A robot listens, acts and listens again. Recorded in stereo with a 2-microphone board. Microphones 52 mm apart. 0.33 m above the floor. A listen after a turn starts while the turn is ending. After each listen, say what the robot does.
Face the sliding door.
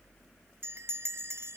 Keep listening.
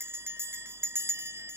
Keep listening.
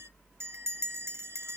I can't make out a sliding door to turn to.